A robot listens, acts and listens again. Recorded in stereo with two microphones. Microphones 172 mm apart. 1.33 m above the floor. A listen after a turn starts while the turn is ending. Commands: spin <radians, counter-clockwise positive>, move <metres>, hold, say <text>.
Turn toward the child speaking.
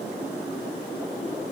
hold
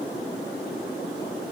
hold
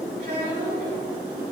spin -1.57
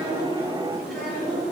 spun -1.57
hold
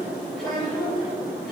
say Found it: a child speaking, straight ahead.